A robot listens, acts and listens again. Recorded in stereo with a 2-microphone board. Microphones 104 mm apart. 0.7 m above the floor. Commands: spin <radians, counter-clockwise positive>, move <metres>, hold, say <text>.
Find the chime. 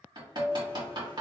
spin 0.52
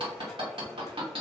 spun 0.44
hold
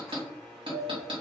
spin 2.71
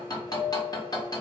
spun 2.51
spin 0.17
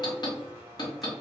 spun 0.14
hold
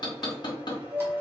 say Facing the chime.